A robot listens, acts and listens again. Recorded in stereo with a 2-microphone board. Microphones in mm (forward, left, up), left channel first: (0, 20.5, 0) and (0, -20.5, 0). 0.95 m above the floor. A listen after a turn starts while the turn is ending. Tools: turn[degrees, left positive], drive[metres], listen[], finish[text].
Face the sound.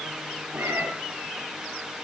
Action: turn[-90]
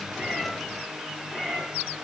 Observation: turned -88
Action: finish[Found it: a cat meowing, straight ahead.]